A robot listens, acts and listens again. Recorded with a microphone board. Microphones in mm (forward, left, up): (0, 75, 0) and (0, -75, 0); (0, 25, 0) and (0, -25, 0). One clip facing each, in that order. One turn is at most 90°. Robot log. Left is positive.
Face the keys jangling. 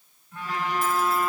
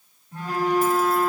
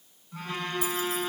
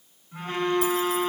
cmd idle
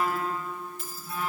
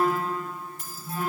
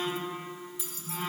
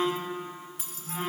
note: The keys jangling: about 55° right or 125° right.
cmd yaw -55
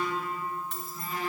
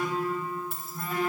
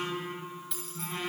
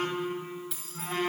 end: Found it: keys jangling, straight ahead.